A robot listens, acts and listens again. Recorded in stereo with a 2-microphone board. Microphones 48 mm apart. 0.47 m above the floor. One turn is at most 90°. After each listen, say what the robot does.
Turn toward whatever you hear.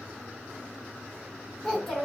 Turn 30° left.
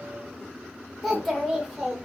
Turn 30° right.
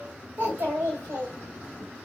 Turn 90° right.
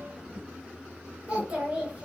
Turn 30° right.
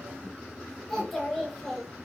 Facing the child speaking.